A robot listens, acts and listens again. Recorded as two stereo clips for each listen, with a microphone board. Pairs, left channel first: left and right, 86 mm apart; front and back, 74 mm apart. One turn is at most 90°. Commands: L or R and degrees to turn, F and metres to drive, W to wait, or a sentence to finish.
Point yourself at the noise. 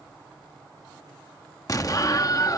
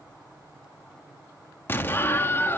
L55
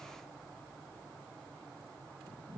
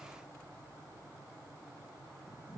I heard an explosion from this way, but can't make it out now.